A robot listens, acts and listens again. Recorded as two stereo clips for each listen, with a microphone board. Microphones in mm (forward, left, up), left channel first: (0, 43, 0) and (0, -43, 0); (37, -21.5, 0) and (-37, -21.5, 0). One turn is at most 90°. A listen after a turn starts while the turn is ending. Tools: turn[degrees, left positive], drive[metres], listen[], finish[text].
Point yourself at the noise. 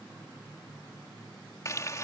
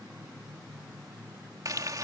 Thought: The frying: 140° left.
Action: turn[90]
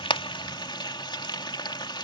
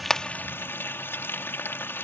Thought: The frying is now 60° left.
Action: turn[60]
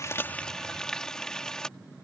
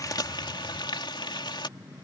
Action: finish[Facing the frying.]